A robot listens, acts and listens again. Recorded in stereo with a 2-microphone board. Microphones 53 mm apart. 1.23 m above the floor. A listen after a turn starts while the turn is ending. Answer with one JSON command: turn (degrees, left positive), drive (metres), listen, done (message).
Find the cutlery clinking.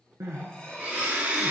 {"turn": 20}
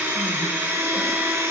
{"listen": true}
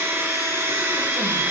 {"listen": true}
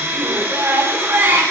{"done": "I heard cutlery clinking, but can't make it out now. It was about straight ahead or 140° left."}